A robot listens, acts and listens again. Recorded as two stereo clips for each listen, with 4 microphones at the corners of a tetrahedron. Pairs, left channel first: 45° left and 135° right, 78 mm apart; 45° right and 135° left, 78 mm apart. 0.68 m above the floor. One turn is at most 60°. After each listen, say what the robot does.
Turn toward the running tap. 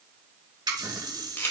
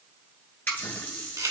Turn 60° right.
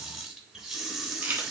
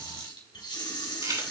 Turn 50° right.
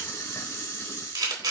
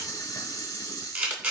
Found it: a running tap, straight ahead.